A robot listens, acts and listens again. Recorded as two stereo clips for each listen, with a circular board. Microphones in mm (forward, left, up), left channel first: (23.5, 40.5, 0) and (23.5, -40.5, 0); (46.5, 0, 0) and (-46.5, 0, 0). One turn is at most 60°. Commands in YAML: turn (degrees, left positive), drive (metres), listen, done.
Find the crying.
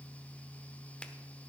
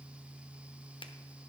listen: true
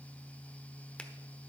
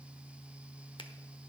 listen: true
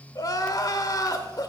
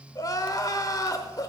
turn: 50
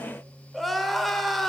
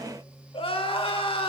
done: "Found it: crying, straight ahead, under 1 m away."